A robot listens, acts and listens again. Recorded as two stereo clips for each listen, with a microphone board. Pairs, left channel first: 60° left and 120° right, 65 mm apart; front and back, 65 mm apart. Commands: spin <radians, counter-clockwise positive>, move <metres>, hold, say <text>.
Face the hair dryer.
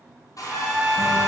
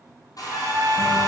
spin 0.52
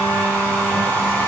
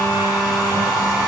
say Facing the hair dryer, 2 to 4 m away.